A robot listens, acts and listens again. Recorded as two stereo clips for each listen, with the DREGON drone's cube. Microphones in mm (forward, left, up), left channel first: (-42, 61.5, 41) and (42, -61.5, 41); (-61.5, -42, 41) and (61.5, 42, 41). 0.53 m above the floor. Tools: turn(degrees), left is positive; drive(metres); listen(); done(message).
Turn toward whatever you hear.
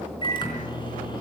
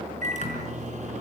turn(degrees=70)
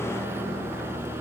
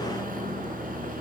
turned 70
turn(degrees=20)
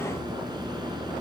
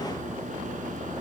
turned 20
listen()
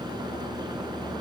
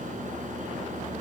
listen()
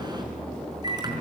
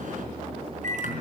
done("Found it: a microwave, straight ahead.")